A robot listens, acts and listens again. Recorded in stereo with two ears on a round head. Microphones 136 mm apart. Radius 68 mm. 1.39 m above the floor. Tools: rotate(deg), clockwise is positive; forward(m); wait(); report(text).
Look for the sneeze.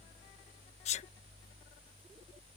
rotate(-45)
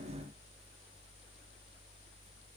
wait()
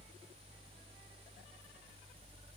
report("I heard a sneeze, but can't make it out now. It was about straight ahead or 90° left.")